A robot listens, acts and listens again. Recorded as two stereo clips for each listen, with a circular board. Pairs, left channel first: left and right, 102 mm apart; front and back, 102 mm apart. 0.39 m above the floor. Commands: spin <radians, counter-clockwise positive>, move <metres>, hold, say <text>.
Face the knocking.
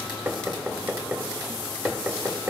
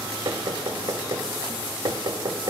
spin -2.71
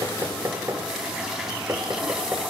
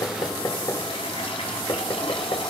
spin -0.61
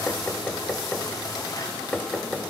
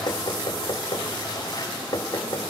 spin 0.17
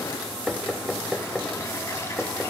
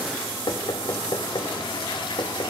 say Found it: knocking, straight ahead.